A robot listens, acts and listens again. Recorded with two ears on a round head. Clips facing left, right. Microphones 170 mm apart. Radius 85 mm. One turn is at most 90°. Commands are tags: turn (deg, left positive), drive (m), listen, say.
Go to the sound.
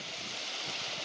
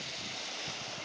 <listen/>
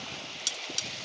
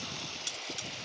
<turn deg="55"/>
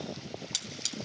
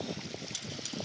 <turn deg="70"/>
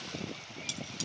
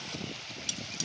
<turn deg="-15"/>
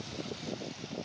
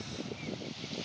<listen/>
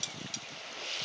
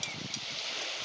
<drive m="1.0"/>
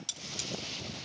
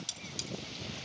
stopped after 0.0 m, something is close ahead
<say>Something is in my way. I am facing the cutlery clinking but have not reached it.</say>